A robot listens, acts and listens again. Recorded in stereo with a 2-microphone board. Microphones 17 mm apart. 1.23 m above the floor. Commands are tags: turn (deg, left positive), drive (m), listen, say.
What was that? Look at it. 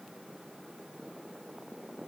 <listen/>
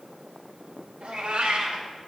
<turn deg="-90"/>
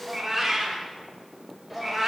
<say>Facing the cat meowing.</say>